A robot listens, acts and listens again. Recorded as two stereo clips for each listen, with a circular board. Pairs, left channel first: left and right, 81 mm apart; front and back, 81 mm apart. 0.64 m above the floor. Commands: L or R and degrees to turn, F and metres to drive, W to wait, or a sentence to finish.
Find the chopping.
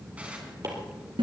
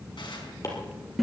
R45
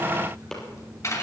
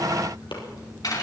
L10
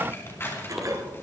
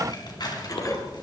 W
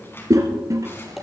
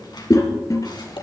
Found it: chopping, straight ahead.